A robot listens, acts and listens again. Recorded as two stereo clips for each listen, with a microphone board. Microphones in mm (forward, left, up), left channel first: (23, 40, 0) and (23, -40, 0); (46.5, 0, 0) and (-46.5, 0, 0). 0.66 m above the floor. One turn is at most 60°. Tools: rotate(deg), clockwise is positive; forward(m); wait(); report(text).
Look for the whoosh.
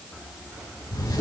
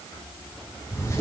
wait()
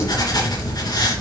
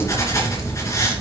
wait()
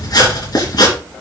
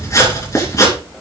report("I can't make out a whoosh, only writing.")